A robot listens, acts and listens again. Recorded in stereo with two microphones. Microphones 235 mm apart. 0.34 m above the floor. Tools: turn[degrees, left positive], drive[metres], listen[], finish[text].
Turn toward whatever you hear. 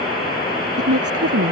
Action: turn[-90]
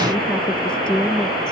Action: finish[Found it: a woman speaking, straight ahead.]